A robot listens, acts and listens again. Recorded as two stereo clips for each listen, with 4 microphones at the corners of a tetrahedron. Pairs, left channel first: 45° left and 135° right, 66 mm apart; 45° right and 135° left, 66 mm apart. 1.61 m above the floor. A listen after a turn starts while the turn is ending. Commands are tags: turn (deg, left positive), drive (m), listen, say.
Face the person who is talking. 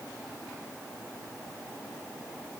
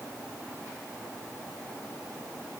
<listen/>
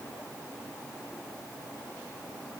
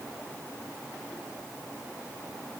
<listen/>
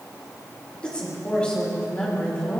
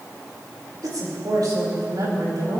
<turn deg="120"/>
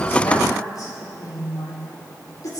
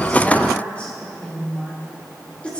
<turn deg="25"/>
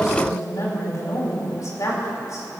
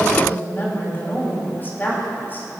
<turn deg="10"/>
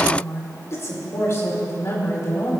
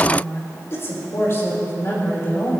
<say>Facing the woman speaking, over 4 m away.</say>